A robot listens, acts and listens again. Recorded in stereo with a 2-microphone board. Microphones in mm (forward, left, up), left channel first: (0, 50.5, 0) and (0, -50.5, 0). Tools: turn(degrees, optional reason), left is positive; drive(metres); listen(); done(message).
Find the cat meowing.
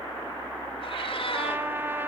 turn(degrees=65, reason="The cat meowing: about 65° left or 115° left.")
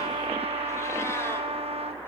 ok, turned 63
listen()
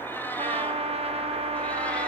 listen()
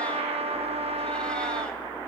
done("I heard a cat meowing, but can't make it out now. It was about 5° left or 50° left.")